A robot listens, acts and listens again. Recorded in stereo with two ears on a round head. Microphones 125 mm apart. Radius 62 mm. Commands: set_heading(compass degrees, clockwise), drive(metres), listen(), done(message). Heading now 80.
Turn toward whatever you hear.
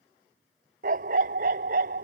set_heading(145)
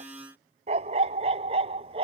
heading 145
set_heading(185)
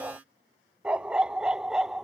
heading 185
done("Facing the dog barking.")